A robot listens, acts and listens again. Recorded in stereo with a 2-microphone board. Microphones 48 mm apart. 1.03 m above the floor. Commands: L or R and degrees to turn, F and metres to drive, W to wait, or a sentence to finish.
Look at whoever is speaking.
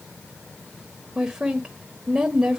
R30
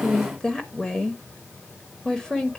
L15
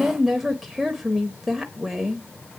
Facing the woman speaking, under 1 m away.